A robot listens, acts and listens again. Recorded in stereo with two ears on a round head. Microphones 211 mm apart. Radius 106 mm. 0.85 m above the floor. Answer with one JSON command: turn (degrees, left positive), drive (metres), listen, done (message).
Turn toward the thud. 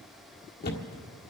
{"turn": 45}
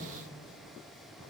{"listen": true}
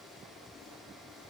{"done": "I heard a thud, but can't make it out now. It was about straight ahead or 90° left."}